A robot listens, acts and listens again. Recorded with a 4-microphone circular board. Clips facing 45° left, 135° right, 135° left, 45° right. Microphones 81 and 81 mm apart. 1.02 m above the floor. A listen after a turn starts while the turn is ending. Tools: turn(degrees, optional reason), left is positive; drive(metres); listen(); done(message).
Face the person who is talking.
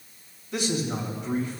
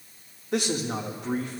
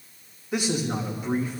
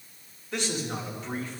turn(degrees=-145, reason="The man speaking: 145° right.")
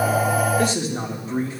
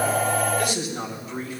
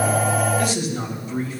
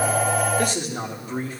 done("Facing the man speaking, 1 to 2 m away.")